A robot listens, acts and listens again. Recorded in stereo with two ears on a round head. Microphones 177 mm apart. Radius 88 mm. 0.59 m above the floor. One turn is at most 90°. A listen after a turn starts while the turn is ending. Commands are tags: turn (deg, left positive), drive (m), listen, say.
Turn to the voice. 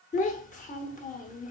<turn deg="40"/>
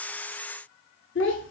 <turn deg="90"/>
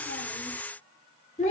<turn deg="40"/>
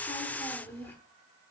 <turn deg="10"/>
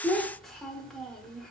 <say>Found it: a child speaking, straight ahead.</say>